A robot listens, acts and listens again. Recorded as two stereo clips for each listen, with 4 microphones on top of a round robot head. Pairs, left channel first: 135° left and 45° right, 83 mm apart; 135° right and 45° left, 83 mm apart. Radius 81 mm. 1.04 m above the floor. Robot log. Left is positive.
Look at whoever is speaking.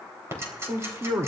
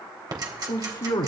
note: The man speaking: 100° right.
cmd yaw -100
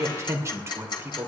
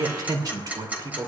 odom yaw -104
note: The man speaking is now 15° left.
cmd yaw +15
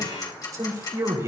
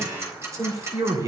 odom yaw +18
end: Facing the man speaking.